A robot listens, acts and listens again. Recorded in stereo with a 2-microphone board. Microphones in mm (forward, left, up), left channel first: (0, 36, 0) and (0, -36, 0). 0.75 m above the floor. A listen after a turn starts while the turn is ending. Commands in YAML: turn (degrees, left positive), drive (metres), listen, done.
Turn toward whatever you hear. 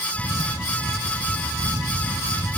turn: -90
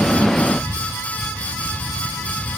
turn: 15
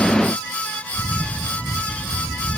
done: "Facing the camera shutter."